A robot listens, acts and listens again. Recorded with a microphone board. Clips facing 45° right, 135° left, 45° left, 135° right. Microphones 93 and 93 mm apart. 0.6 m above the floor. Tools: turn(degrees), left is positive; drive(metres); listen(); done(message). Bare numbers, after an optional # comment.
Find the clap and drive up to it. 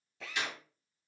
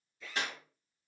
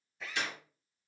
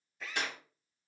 # The clap: 175° right.
turn(-175)
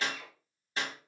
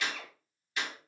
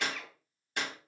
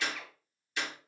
# The clap is now 10° left.
turn(10)
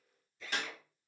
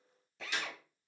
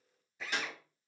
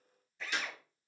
drive(1.0)
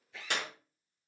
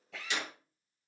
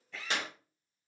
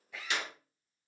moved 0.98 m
drive(1.0)
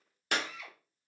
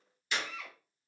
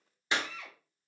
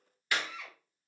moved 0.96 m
# The clap is now 20° right.
turn(-20)
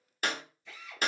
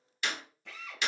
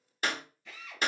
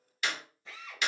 drive(1.0)
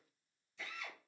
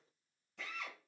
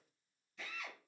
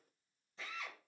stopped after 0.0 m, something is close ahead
listen()
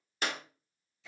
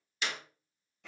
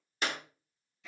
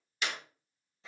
done("I am next to the clap.")